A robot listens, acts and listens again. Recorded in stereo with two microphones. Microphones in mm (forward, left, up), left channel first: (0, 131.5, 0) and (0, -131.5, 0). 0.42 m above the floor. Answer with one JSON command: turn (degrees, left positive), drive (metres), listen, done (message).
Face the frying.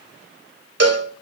{"listen": true}
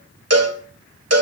{"listen": true}
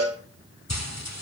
{"turn": 90}
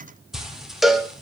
{"done": "Facing the frying."}